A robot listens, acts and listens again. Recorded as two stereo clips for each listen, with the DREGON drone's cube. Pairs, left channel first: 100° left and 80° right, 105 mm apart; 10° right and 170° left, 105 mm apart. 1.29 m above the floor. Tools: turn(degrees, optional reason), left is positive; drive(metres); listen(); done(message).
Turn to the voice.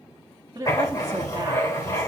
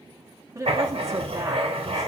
turn(degrees=-130, reason="The woman speaking: 130° right.")
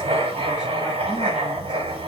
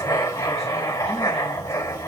listen()
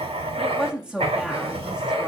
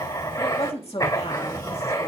done("Facing the woman speaking.")